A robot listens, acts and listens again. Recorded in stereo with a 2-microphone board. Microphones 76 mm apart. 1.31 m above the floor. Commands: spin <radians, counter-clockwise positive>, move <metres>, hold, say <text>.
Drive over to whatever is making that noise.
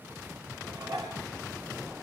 spin -1.22
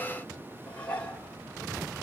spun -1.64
spin 0.35
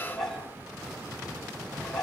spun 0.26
move 1.0
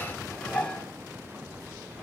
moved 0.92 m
spin 0.26
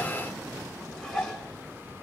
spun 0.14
move 1.0
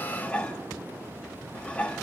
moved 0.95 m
spin 0.26
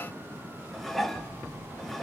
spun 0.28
move 1.0
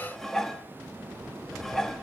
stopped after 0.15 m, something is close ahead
say I am next to the dishes clattering.